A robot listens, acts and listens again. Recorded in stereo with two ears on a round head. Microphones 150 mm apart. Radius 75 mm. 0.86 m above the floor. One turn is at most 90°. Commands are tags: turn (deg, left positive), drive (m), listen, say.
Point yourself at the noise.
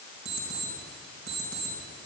<turn deg="-65"/>
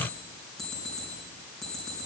<say>Facing the alarm clock.</say>